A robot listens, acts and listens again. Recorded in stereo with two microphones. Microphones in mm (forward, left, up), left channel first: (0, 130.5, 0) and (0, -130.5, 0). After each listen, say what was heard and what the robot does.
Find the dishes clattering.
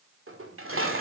The dishes clattering: about 60° right or 120° right. Turn 60° right.
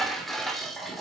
Found it: dishes clattering, straight ahead.